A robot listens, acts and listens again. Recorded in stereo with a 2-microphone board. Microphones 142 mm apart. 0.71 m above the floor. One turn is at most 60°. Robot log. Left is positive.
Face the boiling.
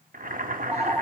cmd yaw -60
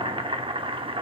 note: So it is at 40° right.
cmd yaw -40
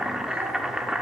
end: Facing the boiling.